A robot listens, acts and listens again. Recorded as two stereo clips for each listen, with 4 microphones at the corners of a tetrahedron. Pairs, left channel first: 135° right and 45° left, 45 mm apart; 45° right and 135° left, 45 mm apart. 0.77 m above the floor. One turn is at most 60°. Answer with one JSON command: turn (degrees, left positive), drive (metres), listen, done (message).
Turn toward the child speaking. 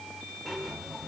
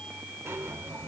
{"listen": true}
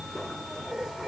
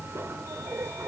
{"listen": true}
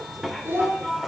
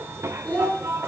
{"done": "Found it: a child speaking, straight ahead."}